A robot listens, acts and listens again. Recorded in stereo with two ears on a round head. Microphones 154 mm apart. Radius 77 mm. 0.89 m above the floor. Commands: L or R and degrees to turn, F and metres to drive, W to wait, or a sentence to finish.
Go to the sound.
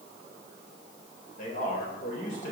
L50
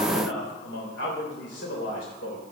L75
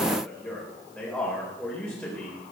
F1.0
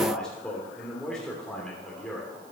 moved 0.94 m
F1.0
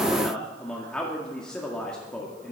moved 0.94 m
F1.0
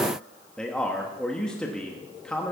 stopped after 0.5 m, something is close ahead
I am next to the man speaking.